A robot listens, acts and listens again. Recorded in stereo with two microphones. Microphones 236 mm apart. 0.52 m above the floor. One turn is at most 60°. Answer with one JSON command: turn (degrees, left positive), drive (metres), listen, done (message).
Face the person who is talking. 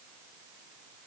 {"listen": true}
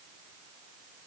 {"listen": true}
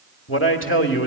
{"turn": 60}
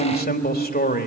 {"turn": 45}
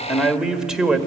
{"done": "Facing the man speaking."}